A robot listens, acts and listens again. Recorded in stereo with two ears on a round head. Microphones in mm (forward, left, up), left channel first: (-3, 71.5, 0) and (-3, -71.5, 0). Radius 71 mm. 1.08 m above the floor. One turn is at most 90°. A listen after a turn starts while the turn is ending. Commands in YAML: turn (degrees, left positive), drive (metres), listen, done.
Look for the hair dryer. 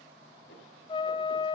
listen: true
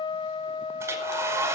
turn: -15
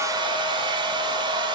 turn: -90
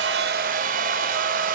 turn: -60
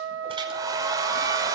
turn: -25
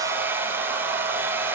turn: -15
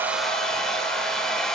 done: "Found it: a hair dryer, straight ahead."